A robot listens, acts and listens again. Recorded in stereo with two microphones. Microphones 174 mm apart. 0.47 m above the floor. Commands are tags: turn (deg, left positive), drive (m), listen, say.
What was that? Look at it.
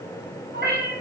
<turn deg="-90"/>
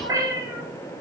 <turn deg="-25"/>
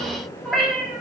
<say>Found it: a cat meowing, straight ahead, 1 to 2 m away.</say>